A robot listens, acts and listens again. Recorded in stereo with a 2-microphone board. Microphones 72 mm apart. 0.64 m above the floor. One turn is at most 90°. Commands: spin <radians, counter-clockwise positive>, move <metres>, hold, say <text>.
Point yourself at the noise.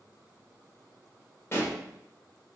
spin 0.61
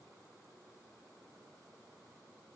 hold
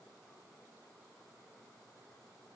say I heard a pop, but can't make it out now. It was about straight ahead or 110° left.